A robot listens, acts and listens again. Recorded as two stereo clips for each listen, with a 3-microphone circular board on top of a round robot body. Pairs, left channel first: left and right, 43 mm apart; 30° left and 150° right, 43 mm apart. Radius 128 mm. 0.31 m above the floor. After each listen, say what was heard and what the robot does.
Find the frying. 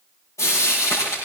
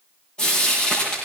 The frying: 105° left. Turn 105° left.
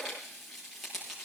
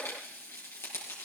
Facing the frying, over 4 m away.